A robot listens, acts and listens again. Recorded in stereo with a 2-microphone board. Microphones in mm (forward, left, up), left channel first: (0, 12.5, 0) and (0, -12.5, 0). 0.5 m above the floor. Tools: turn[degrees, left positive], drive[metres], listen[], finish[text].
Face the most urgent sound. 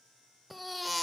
Action: turn[30]
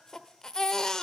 Thought: So it is at 150° left.
Action: turn[150]
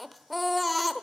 Action: finish[Facing the baby crying.]